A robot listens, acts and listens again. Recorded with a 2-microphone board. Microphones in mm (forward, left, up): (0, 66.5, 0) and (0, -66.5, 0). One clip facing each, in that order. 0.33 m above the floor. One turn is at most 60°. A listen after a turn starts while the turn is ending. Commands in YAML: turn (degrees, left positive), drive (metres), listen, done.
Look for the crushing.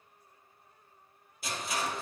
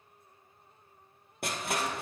turn: -60
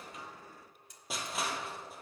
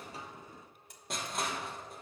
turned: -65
done: "Found it: crushing, straight ahead, 1 to 2 m away."